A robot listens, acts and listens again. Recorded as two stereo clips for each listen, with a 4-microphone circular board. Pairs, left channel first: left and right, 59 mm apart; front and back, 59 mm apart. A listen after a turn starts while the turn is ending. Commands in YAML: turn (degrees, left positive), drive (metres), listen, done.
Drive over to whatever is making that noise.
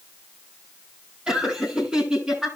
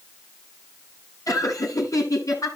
turn: -15
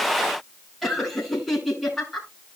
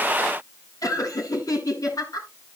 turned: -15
drive: 1.0
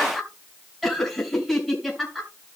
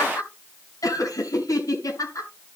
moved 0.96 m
drive: 1.0
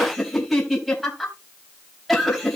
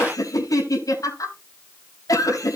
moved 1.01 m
drive: 1.0
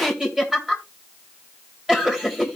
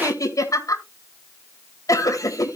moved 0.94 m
turn: -10
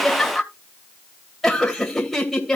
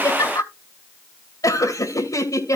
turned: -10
drive: 1.0
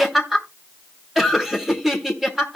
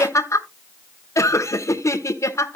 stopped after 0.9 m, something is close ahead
done: "I am next to the laughter."